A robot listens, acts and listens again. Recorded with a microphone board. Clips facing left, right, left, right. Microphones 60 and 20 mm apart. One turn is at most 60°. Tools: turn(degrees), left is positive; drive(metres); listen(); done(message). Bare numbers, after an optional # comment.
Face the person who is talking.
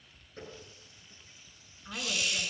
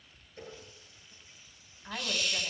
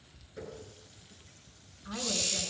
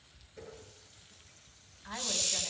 # The woman speaking: about 50° right or 130° right.
turn(-50)
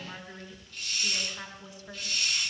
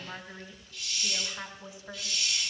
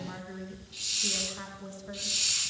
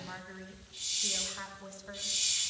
done("Facing the woman speaking.")